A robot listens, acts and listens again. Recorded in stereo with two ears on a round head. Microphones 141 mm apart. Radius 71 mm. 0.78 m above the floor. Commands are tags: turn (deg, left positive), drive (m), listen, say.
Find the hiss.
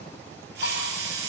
<turn deg="-90"/>
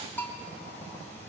<listen/>
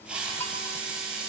<say>Found it: a hiss, straight ahead, 2 to 4 m away.</say>